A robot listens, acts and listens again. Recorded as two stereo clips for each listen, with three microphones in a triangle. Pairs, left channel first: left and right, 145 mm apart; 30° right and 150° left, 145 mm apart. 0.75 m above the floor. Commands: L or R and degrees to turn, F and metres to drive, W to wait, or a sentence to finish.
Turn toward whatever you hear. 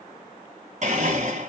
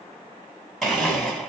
R120
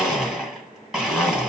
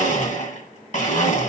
Facing the blender.